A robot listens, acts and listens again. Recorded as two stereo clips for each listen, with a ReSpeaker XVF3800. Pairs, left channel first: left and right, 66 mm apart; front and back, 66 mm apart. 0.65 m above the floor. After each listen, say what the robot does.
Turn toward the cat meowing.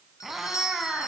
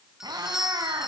Turn 175° right.
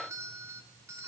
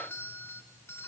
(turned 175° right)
Keep listening.
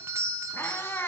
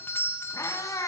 Turn 35° left.
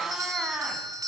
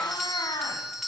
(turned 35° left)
Turn 10° right.
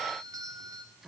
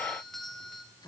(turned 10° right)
Keep listening.
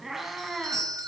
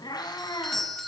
Facing the cat meowing, 2 to 4 m away.